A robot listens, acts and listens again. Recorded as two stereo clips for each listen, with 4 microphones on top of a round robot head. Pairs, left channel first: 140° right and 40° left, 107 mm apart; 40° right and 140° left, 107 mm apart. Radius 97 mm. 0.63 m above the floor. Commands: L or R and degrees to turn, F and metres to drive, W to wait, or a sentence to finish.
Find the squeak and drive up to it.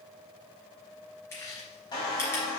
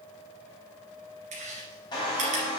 R90
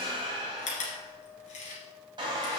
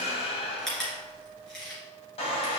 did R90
F1.0
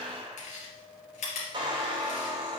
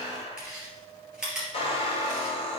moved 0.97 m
F1.0
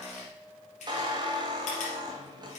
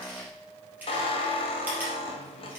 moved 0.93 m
F1.0
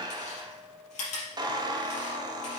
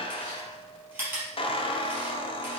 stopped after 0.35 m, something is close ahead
R10
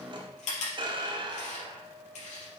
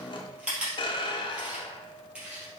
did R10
I am next to the squeak.